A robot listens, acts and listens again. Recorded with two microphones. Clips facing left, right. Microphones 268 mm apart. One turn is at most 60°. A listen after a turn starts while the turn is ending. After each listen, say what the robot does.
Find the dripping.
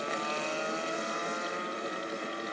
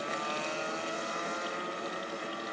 Keep listening.
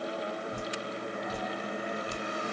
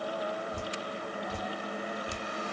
Turn 30° left.
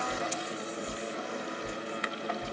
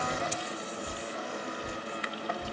Turn 20° right.
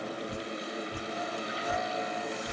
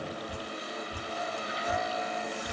Found it: dripping, straight ahead, 1 to 2 m away.